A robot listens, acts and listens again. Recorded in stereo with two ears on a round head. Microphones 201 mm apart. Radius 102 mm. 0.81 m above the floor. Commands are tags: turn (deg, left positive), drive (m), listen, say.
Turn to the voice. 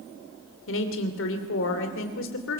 <turn deg="65"/>
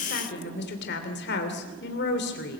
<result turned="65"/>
<turn deg="50"/>
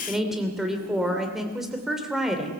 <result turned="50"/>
<say>Facing the woman speaking.</say>